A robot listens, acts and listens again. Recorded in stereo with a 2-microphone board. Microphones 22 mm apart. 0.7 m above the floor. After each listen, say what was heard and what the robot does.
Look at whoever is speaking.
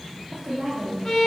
The woman speaking: about 50° right or 130° right. Turn 50° right.
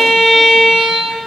Keep listening.
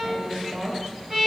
So it is at 70° right. Turn 70° right.
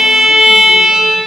Keep listening.
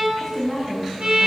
Facing the woman speaking, 1 to 2 m away.